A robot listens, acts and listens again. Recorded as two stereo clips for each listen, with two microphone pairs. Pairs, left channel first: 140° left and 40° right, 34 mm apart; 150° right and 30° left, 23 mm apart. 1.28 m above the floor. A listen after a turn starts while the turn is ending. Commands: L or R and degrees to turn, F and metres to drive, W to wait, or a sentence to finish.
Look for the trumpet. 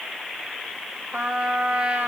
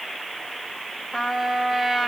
R65
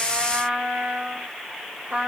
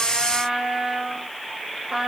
R10
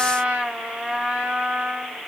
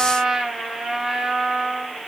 Facing the trumpet.